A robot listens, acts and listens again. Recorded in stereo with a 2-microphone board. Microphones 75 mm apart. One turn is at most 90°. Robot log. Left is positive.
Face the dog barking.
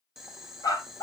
note: The dog barking: about 55° left or 125° left.
cmd yaw +55
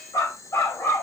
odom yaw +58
note: So it is at 35° left.
cmd yaw +35
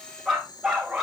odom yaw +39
note: The dog barking is now 10° right.
cmd yaw -10
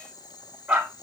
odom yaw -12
note: The dog barking is now 15° right.
cmd yaw -15
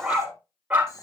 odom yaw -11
note: The dog barking is now 20° right.
cmd yaw -20
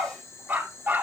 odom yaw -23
note: The dog barking is now 20° right.
cmd yaw -20
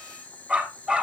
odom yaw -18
end: Found it: a dog barking, straight ahead.